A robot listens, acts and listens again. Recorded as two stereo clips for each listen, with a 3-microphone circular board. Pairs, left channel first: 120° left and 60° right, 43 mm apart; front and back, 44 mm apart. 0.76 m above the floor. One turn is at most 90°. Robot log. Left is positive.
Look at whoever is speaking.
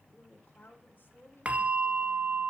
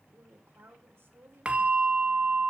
note: The woman speaking: 170° left.
cmd yaw +90
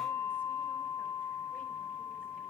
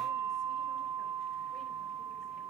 note: Nothing new. It was at 80° left.
cmd yaw +80
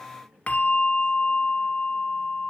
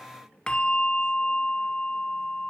cmd idle
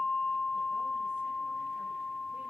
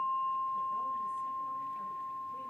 end: Facing where the woman speaking came from. I can't hear it now.